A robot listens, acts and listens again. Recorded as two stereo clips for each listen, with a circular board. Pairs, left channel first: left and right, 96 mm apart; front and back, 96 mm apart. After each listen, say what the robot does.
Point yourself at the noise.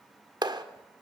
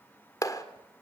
Turn 50° right.
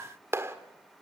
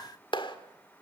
Turn 30° right.
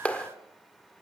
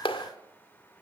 Turn 15° left.
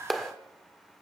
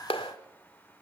Found it: a clap, straight ahead.